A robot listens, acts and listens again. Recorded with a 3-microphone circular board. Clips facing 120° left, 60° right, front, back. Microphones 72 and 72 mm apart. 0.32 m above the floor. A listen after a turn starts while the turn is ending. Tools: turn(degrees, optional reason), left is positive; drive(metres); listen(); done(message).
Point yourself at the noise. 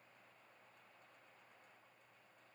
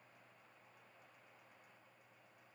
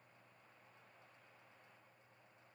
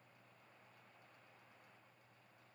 listen()
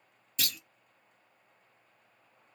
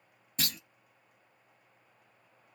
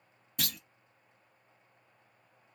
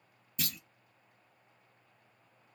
turn(degrees=-10, reason="The clunk: 10° right.")
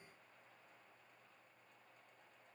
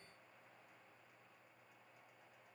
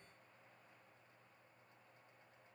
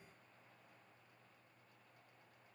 done("Facing where the clunk came from. I can't hear it now.")